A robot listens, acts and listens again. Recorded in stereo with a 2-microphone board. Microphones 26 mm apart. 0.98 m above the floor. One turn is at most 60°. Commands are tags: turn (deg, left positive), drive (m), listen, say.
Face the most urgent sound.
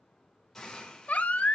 <turn deg="60"/>
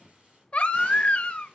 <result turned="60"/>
<turn deg="50"/>
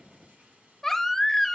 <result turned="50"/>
<turn deg="10"/>
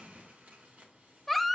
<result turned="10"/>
<say>Facing the baby crying, under 1 m away.</say>